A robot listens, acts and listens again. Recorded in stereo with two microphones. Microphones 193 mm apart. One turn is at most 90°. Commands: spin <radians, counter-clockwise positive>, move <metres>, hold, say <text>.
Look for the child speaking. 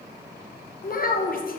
spin 0.87
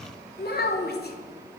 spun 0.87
spin 1.22
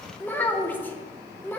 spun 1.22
spin 0.17
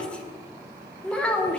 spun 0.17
say Found it: a child speaking, straight ahead, under 1 m away.